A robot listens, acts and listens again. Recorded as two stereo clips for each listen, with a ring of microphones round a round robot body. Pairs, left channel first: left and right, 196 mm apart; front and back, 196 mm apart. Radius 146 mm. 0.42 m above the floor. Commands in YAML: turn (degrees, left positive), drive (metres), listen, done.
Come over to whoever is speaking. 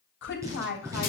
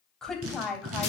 turn: 85
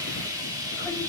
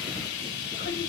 turn: 15
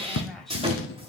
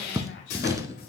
drive: 1.0
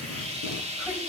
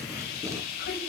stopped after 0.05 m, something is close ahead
listen: true
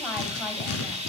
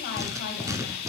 listen: true
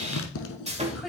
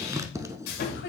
done: "Blocked. The woman speaking is further on, straight ahead."